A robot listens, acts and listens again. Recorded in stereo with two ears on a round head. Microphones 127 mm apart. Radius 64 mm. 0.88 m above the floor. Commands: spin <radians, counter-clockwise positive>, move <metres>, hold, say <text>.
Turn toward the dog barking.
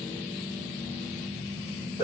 hold
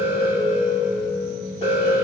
hold
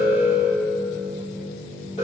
say I can't make out a dog barking, only an alarm.